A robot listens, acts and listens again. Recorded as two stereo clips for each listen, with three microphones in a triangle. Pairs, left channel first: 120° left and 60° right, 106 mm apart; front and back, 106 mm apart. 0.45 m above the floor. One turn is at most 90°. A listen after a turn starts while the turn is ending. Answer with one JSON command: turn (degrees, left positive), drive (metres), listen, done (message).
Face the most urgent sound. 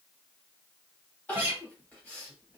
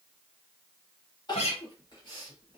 {"turn": 45}
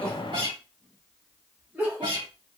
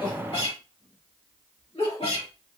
{"turn": 15}
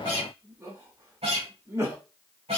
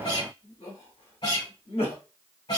{"done": "Facing the crying, 1 to 2 m away."}